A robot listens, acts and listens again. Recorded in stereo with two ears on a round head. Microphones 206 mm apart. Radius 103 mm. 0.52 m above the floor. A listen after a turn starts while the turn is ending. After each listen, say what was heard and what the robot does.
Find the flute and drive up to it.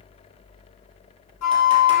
Turn 90° left.
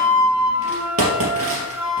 Drive 1.0 m forward.
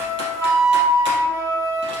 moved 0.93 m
The flute is now 10° right. Turn 10° right.
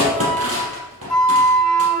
Drive 1.0 m forward.
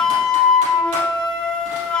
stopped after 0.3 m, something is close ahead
I am next to the flute.